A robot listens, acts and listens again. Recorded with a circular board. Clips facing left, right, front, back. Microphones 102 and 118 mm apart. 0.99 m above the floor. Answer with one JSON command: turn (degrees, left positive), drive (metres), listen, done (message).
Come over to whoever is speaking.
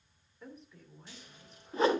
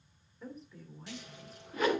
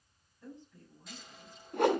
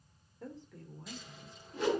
{"turn": 180}
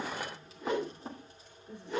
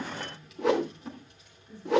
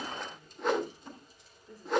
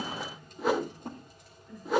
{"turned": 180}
{"turn": 55}
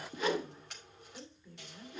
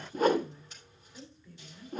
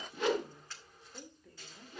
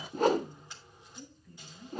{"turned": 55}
{"turn": 20}
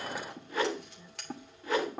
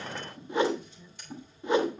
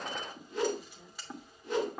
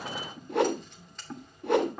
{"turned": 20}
{"listen": true}
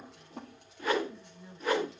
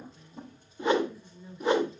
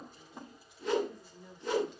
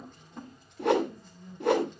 {"drive": 1.0}
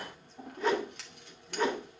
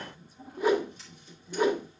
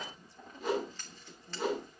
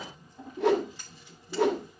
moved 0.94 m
{"turn": -10}
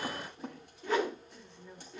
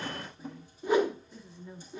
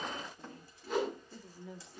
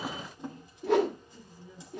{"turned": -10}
{"drive": 1.0}
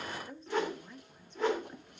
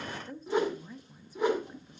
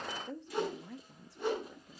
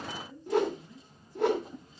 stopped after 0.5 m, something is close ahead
{"done": "Arrived at the woman speaking, straight ahead."}